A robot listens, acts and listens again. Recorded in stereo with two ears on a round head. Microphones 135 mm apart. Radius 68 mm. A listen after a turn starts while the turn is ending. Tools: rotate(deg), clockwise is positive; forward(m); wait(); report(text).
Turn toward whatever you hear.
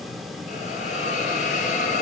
rotate(-55)
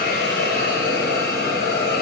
rotate(-70)
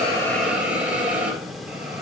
rotate(10)
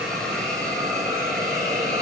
report("Found it: a hiss, straight ahead, 2 to 4 m away.")